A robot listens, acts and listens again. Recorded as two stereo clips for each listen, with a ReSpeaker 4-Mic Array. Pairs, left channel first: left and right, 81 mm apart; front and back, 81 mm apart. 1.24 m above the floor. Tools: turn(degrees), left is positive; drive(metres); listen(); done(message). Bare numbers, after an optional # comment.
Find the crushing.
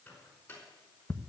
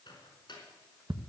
listen()
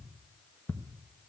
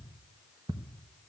listen()
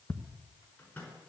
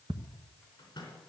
done("I can't make out crushing, only ticking and a microwave.")